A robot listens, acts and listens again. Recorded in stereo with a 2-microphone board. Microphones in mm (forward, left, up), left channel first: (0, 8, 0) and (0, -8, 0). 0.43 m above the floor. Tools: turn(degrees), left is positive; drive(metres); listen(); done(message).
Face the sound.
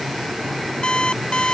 turn(degrees=70)
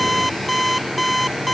done("Found it: an alarm clock, straight ahead.")